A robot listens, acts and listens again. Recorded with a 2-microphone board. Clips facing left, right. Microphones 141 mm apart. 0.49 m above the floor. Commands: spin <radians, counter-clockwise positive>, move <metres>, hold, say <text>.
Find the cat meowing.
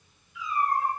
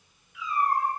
spin -1.57
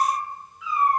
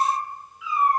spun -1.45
say Facing the cat meowing.